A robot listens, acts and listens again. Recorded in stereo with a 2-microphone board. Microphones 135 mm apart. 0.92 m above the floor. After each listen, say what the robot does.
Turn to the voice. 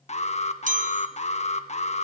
Keep listening.
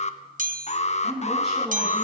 Turn 30° left.
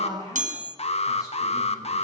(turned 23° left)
Turn 155° left.
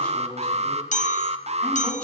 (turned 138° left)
Turn 10° left.
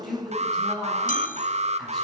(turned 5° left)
Facing the woman speaking.